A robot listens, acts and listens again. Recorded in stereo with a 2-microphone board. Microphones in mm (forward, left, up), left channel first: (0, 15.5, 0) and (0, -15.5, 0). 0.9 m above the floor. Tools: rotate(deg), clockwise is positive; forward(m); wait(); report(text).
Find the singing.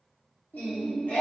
rotate(-70)
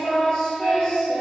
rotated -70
rotate(-30)
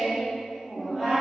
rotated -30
report("Facing the singing, 1 to 2 m away.")